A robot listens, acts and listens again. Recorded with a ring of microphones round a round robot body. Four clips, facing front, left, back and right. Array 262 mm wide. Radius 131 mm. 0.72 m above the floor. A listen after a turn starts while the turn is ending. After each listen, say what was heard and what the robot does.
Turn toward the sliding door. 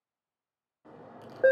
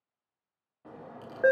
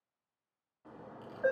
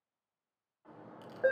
The sliding door: 80° left. Turn 80° left.
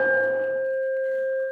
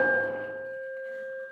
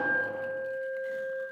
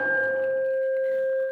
Keep listening.
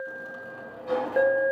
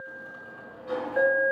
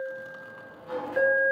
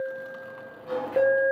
Facing the sliding door, 2 to 4 m away.